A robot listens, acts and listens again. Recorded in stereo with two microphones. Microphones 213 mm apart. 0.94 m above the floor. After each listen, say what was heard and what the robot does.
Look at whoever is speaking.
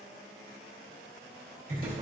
Keep listening.
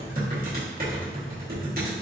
Keep listening.
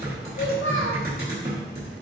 The child speaking: about 65° left or 115° left. Turn 65° left.
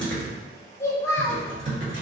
So it is at 15° left. Turn 15° left.
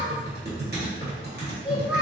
Facing the child speaking, under 1 m away.